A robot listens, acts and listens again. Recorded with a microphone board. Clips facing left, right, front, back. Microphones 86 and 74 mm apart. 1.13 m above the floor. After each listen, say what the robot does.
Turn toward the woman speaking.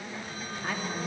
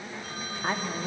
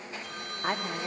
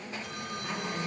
Turn 30° right.
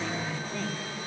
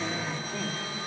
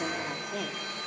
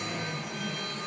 Turn 15° right.
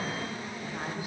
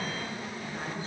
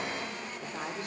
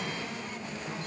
Turn 15° left.
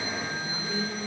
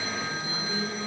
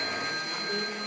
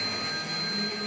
Found it: a woman speaking, straight ahead, 2 to 4 m away.